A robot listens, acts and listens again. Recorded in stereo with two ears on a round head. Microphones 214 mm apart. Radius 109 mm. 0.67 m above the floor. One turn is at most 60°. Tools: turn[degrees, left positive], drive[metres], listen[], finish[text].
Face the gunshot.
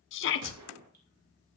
Action: turn[-60]
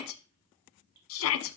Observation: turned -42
Thought: Nothing new. It was at 50° right.
Action: turn[-50]
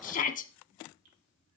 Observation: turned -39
Thought: Nothing new. It was at 10° right.
Action: turn[-10]
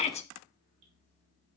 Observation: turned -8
Action: finish[Facing where the gunshot came from. I can't hear it now.]